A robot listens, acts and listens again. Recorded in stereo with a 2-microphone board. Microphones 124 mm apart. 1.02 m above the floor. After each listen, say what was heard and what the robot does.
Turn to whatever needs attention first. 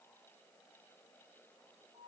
Keep listening.
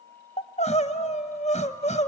The crying: about 60° left or 120° left. Turn 60° left.
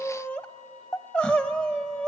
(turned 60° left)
So it is at 10° left. Turn 10° left.
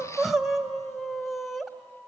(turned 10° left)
Found it: crying, straight ahead, under 1 m away.